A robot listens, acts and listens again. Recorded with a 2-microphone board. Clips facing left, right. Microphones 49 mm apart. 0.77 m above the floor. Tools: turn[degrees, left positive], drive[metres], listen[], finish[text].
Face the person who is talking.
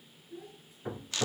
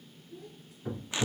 Thought: The child speaking: about 25° left or 155° left.
Action: turn[25]
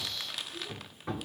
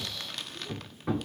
Action: listen[]
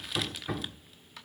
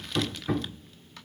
Action: listen[]
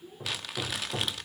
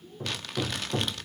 Thought: So it is at 125° left.
Action: turn[125]
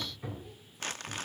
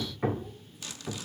Action: listen[]
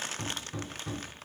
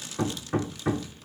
Action: listen[]
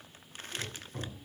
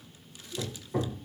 Action: finish[Facing where the child speaking came from. I can't hear it now.]